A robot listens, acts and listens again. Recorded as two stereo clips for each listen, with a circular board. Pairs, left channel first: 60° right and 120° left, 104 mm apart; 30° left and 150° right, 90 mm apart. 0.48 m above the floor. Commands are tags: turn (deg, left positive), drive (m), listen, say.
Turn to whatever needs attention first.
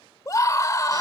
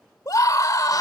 <turn deg="-10"/>
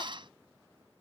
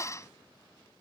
<listen/>
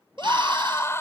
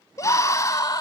<say>Found it: a scream, straight ahead.</say>